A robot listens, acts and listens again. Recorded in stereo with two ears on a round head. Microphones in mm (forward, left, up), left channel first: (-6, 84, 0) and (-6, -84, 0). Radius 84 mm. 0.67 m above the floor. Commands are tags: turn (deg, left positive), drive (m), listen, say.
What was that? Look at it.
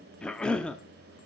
<turn deg="30"/>
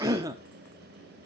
<turn deg="-20"/>
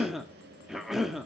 <say>Found it: a cough, straight ahead, under 1 m away.</say>